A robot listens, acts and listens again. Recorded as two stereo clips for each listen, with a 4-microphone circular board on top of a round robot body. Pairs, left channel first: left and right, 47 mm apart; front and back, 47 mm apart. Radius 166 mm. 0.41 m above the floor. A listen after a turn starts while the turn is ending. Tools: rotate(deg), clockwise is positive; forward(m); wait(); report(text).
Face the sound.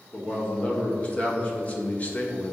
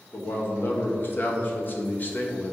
rotate(-45)
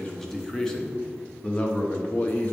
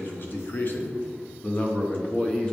rotate(-60)
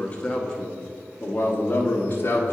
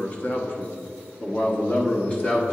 rotate(-55)
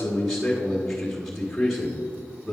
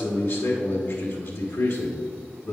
report("Facing the man speaking.")